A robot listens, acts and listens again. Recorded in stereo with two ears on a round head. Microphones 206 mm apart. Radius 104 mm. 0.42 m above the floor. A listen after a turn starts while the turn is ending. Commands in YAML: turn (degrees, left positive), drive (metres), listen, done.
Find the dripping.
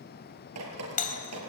turn: -90
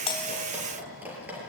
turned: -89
done: "Facing the dripping."